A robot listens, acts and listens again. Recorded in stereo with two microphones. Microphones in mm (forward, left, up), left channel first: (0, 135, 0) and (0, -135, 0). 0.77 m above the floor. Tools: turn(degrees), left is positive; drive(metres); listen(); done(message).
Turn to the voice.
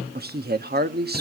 turn(degrees=-35)
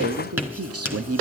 turn(degrees=-100)
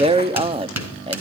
turn(degrees=-25)
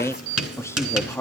turn(degrees=10)
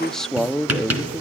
done("Facing the man speaking.")